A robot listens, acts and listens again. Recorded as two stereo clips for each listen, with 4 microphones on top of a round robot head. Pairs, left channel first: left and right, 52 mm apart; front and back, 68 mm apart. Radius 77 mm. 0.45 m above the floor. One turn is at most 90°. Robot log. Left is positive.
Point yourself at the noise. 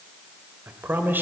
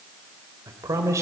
note: The man speaking: 140° right.
cmd yaw -90
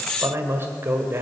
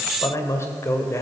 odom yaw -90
note: The man speaking is now 45° right.
cmd yaw -45
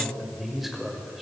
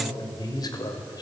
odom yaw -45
end: Found it: a man speaking, straight ahead, 1 to 2 m away.